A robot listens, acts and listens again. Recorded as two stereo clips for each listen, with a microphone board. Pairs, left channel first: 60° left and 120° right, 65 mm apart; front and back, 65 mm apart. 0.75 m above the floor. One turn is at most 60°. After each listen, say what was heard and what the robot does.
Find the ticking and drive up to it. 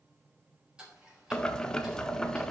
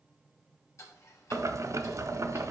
The ticking: 40° right. Turn 40° right.
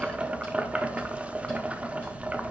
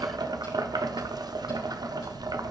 Keep listening.
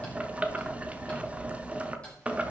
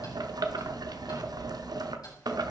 Keep listening.
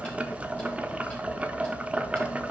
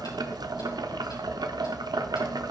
I heard ticking from this way, but can't make it out now. I did not reach it.